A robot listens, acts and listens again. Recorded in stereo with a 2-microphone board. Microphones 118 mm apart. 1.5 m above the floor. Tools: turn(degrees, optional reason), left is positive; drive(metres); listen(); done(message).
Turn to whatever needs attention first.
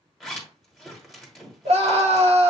turn(degrees=-60, reason="The scream: about 60° right or 120° right.")
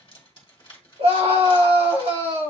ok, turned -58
turn(degrees=-60, reason="So it is at 60° right.")
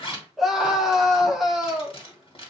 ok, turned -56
done("Facing the scream, 1 to 2 m away.")